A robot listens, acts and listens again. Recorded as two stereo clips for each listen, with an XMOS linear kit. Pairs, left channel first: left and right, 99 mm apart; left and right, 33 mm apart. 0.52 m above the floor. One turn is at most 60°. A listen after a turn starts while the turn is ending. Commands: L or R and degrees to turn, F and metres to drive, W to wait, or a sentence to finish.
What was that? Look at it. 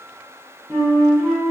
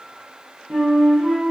R30
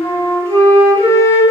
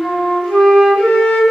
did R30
L25
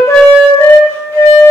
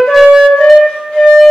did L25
L25
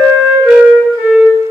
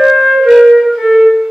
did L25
Found it: a flute, straight ahead.